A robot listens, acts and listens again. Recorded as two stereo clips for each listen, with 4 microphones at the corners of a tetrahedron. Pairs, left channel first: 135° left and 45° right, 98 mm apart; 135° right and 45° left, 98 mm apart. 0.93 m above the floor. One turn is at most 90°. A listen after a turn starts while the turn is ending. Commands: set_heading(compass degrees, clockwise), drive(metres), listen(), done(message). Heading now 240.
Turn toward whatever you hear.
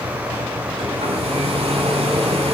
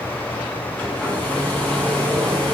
set_heading(295)
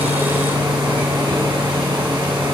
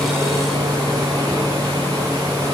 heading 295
done("Facing the hair dryer.")